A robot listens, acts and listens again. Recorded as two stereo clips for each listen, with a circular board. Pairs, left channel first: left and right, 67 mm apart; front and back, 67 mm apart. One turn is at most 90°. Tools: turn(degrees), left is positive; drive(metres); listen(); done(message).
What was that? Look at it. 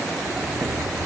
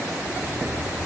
turn(degrees=-70)
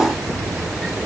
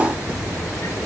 done("Facing the sliding door.")